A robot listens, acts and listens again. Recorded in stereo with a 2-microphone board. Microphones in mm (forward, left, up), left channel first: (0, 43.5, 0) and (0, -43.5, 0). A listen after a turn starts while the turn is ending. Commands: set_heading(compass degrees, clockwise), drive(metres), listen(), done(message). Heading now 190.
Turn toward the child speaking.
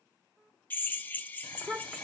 set_heading(160)
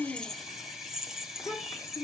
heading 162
set_heading(27)
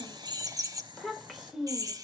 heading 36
done("Found it: a child speaking, straight ahead, 2 to 4 m away.")